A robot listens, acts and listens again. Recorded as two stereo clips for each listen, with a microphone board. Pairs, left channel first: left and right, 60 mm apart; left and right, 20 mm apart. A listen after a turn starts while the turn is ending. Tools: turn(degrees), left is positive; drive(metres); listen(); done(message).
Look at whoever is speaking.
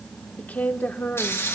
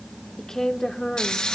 turn(degrees=30)
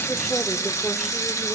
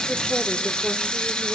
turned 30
listen()
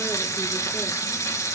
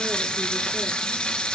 listen()
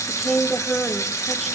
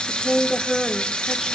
done("Found it: a woman speaking, straight ahead, 1 to 2 m away.")